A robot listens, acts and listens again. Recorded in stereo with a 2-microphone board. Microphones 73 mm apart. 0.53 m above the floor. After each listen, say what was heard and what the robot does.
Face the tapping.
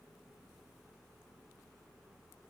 Keep listening.
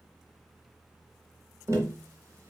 The tapping: about 45° right or 135° right. Turn 45° right.
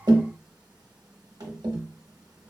So it is at 90° right. Turn 90° right.
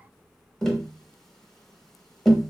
The tapping is now 10° left. Turn 10° left.
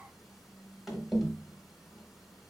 Found it: tapping, straight ahead, under 1 m away.